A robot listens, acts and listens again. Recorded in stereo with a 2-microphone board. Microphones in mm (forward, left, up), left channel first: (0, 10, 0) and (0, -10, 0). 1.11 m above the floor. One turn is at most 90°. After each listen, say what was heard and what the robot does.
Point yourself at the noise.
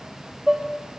The dishes clattering: about 45° right or 135° right. Turn 45° right.
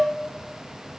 So it is at 85° right. Turn 85° right.
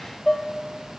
Found it: dishes clattering, straight ahead.